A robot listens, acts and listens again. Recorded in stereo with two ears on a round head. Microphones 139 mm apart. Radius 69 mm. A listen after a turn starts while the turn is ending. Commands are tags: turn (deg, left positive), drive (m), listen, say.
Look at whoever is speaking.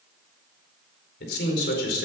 <turn deg="90"/>
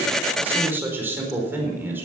<turn deg="-15"/>
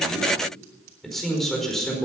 <say>Found it: a man speaking, straight ahead.</say>